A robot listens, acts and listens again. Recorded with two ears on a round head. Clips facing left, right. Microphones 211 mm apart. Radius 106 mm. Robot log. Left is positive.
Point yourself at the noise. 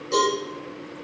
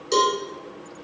note: The cowbell: about 50° right or 130° right.
cmd yaw -50
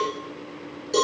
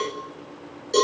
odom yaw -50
end: Found it: a cowbell, straight ahead.